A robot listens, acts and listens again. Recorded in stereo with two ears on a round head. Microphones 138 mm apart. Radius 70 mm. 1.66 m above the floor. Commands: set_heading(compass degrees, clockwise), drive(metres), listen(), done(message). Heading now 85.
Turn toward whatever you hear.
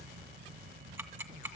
set_heading(100)
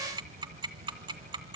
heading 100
set_heading(250)
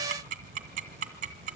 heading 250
set_heading(300)
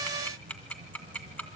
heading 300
set_heading(290)
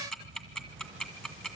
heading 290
done("Found it: ticking, straight ahead.")